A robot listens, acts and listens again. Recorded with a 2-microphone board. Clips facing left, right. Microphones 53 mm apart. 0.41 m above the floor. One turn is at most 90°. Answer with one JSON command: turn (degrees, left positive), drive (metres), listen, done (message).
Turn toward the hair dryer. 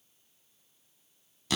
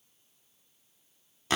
{"listen": true}
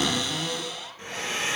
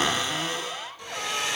{"turn": 35}
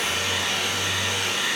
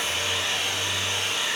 {"turn": 90}
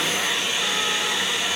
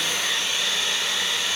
{"turn": 10}
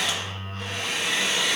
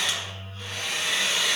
{"done": "Facing the hair dryer, 2 to 4 m away."}